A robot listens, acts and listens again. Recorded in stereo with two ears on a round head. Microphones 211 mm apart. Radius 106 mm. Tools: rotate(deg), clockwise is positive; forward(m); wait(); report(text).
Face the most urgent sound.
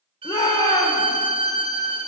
rotate(-15)
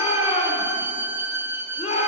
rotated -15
rotate(-150)
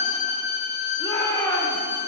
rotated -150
rotate(-20)
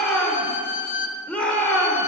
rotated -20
report("Found it: a shout, straight ahead, 1 to 2 m away.")